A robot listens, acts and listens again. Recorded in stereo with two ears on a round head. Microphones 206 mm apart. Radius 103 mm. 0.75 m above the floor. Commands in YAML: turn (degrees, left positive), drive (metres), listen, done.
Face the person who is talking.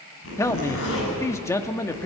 turn: 30
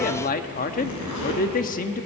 turn: 135
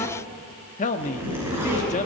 turn: 40
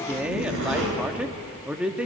done: "Found it: a man speaking, straight ahead."